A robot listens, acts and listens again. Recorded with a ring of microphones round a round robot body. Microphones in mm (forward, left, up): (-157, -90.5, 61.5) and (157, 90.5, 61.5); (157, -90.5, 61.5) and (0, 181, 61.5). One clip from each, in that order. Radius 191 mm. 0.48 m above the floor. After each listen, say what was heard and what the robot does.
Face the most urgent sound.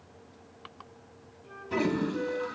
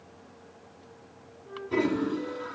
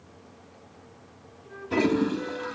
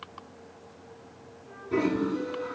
Keep listening.
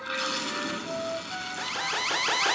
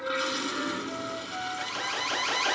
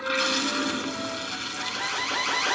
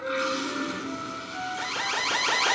The alarm: 175° right. Turn 175° right.
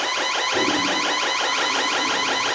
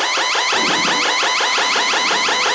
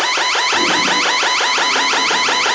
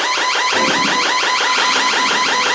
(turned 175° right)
Found it: an alarm, straight ahead, 1 to 2 m away.